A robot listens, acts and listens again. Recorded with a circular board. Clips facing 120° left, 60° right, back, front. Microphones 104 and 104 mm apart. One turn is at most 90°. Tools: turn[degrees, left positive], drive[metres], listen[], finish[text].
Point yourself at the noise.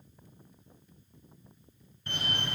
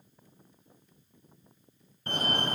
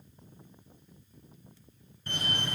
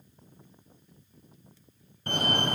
Thought: The fire alarm: 20° right.
Action: turn[-20]
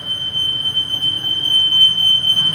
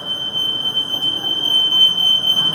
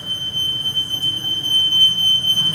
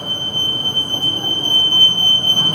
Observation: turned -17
Action: finish[Found it: a fire alarm, straight ahead.]